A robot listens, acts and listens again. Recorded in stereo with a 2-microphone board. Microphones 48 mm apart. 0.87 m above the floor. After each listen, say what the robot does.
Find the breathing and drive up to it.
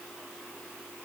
Keep listening.
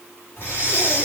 Turn 50° left.
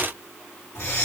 Turn 75° left.
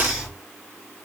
Drive 1.0 m forward.
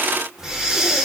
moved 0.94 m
Turn 10° right.
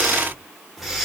Drive 1.0 m forward.
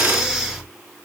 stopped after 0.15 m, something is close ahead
Arrived at the breathing, straight ahead.